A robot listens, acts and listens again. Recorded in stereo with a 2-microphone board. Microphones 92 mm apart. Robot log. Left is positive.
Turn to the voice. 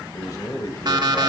note: The man speaking: about 40° left or 140° left.
cmd yaw +40
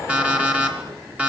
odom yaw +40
cmd idle
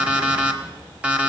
cmd idle
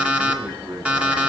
note: So it is at 20° right.
cmd yaw -20
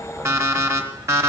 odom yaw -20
cmd idle
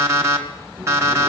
cmd idle
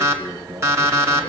note: The man speaking is now 10° right.
cmd yaw -10
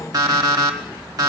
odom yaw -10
cmd idle
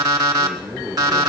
end: Facing the man speaking.